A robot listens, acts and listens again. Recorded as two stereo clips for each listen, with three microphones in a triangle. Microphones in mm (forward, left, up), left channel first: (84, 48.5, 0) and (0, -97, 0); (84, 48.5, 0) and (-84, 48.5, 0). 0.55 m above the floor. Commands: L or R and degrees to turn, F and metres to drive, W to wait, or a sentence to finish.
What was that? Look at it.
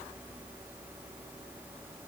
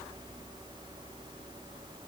W
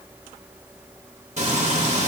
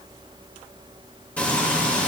R80
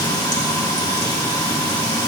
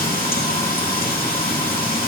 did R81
Facing the frying, 1 to 2 m away.